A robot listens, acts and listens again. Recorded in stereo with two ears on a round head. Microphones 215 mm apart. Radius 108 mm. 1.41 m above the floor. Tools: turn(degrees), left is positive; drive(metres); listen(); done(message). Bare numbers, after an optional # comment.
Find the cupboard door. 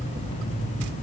listen()
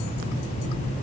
listen()
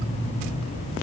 done("I can't make out a cupboard door to turn to.")